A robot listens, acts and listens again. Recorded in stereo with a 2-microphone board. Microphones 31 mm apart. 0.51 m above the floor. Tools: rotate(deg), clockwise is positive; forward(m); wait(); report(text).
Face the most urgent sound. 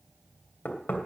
wait()
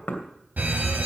rotate(70)
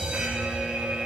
rotate(25)
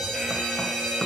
report("Facing the fire alarm, over 4 m away.")